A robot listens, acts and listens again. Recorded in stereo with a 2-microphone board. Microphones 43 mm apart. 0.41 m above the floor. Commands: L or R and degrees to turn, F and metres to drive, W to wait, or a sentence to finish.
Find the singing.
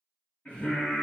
L40
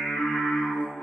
L95
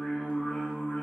L30
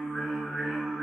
Found it: singing, straight ahead.